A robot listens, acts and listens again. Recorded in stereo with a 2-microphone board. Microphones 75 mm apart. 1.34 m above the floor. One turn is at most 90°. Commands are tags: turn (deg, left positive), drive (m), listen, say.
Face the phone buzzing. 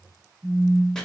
<turn deg="-20"/>
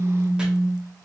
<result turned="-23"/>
<say>Found it: a phone buzzing, straight ahead.</say>